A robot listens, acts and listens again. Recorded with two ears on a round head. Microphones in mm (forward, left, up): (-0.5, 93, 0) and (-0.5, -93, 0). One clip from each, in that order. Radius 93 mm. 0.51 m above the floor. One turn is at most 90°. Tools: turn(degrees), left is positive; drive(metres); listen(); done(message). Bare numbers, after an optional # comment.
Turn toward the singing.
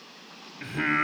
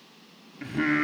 # The singing: about 20° left or 160° left.
turn(20)
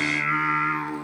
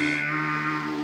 # The singing: about 35° left or 145° left.
turn(35)
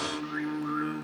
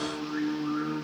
# So it is at 110° left.
turn(90)
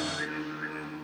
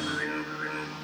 done("Found it: singing, straight ahead.")